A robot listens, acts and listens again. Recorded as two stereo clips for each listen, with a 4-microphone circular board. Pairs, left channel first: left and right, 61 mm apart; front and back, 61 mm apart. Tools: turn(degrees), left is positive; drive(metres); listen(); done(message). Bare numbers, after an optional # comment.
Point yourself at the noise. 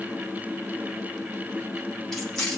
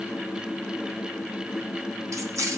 # The keys jangling: 170° left.
turn(170)
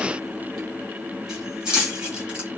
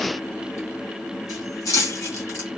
# The keys jangling is now 15° right.
turn(-15)
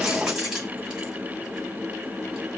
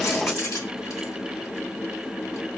# The keys jangling is now 10° right.
turn(-10)
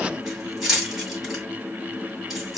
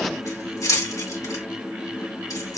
done("Facing the keys jangling.")